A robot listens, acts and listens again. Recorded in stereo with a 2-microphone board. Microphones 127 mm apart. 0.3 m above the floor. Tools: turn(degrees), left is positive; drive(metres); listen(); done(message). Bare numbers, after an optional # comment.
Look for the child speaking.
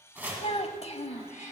# The child speaking: about 55° left or 125° left.
turn(55)
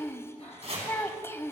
# So it is at 20° left.
turn(20)
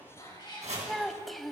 done("Found it: a child speaking, straight ahead.")